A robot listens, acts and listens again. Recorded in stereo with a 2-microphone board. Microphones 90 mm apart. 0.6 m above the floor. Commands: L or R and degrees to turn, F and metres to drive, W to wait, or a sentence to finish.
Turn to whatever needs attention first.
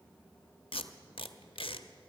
W
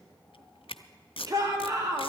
R40
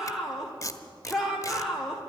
Facing the shout.